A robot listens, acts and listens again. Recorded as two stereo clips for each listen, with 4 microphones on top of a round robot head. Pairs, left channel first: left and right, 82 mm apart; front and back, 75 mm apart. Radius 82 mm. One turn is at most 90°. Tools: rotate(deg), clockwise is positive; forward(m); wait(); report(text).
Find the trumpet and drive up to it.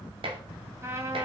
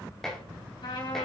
rotate(35)
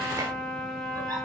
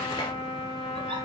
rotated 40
forward(1.0)
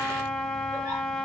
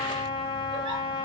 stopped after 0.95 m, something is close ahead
report("Blocked. The trumpet is further on, straight ahead.")